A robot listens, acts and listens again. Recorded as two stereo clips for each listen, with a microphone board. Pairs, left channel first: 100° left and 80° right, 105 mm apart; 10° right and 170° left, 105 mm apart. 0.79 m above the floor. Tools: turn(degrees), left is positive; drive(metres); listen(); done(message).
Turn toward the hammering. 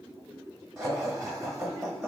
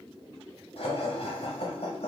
listen()
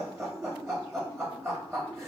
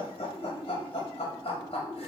listen()
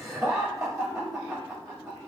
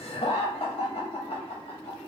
done("I can't make out hammering, only laughter.")